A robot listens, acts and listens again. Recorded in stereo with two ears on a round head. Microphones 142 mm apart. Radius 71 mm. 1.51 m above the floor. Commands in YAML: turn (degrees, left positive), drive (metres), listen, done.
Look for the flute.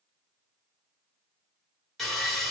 listen: true
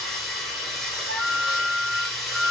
turn: -70
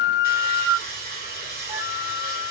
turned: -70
turn: -30
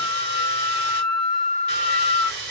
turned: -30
done: "Facing the flute."